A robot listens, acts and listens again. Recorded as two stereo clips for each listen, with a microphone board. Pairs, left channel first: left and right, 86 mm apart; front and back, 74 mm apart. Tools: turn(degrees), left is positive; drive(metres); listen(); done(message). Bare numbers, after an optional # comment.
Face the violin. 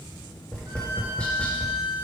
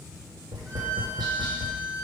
# The violin: 70° right.
turn(-70)
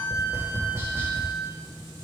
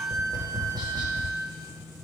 # The violin is now 25° right.
turn(-25)
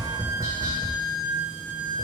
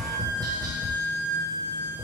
# The violin is now 20° right.
turn(-20)
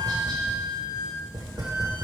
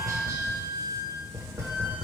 done("Facing the violin.")